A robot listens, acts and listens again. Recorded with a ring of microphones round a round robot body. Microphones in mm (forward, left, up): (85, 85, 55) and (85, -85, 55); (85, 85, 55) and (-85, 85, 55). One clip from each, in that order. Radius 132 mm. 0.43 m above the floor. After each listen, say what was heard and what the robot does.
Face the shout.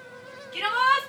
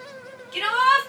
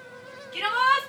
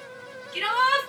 The shout: 100° right. Turn 100° right.
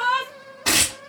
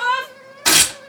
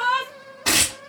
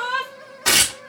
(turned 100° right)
Facing the shout, 2 to 4 m away.